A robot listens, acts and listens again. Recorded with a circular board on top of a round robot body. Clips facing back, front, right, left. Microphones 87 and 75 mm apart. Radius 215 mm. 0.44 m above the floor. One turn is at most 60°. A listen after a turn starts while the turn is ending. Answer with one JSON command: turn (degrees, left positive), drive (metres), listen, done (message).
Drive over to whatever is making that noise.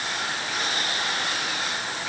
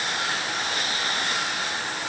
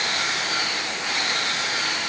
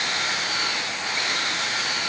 {"listen": true}
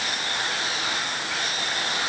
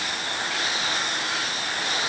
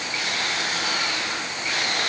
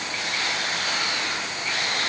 {"listen": true}
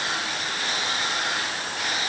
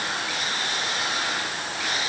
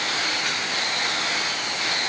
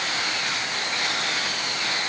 {"done": "I can't make out anything to turn to."}